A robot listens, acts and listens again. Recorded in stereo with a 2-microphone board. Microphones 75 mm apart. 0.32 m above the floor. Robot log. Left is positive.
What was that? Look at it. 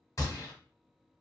note: The gunshot: about 50° left or 130° left.
cmd yaw +50
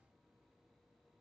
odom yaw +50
cmd idle
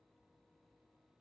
end: I heard a gunshot, but can't make it out now. It was about straight ahead or 80° left.